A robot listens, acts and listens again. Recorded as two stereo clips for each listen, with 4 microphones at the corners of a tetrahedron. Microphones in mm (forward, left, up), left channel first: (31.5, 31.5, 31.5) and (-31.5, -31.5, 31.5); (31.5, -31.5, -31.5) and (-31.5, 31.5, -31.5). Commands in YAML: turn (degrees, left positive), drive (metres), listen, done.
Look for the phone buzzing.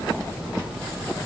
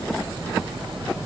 listen: true
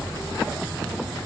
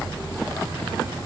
listen: true
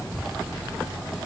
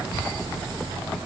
done: "I can't make out a phone buzzing to turn to."